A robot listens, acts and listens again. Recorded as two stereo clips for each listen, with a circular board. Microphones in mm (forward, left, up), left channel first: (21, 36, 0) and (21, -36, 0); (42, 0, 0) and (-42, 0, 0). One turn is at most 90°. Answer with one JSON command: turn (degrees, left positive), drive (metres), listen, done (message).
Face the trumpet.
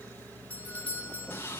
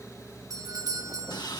{"listen": true}
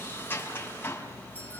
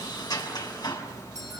{"listen": true}
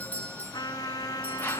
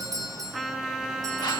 {"turn": 90}
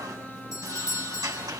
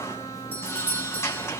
{"listen": true}
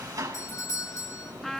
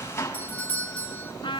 {"done": "Found it: a trumpet, straight ahead, 2 to 4 m away."}